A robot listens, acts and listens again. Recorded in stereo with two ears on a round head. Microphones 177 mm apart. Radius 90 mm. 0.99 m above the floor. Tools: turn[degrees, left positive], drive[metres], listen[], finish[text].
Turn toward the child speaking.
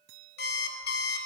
Action: listen[]
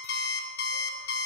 Action: listen[]
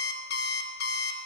Action: finish[I can't make out a child speaking, only an alarm clock.]